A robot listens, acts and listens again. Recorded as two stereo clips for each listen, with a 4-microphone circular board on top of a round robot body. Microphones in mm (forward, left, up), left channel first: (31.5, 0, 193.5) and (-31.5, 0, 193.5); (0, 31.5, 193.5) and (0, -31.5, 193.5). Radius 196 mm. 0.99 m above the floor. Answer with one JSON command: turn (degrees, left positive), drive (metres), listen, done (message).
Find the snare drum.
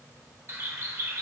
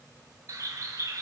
{"listen": true}
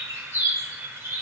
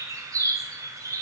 {"listen": true}
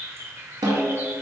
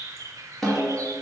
{"turn": 175}
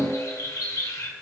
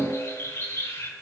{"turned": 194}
{"turn": -20}
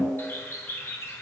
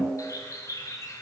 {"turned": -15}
{"done": "Facing the snare drum, 1 to 2 m away."}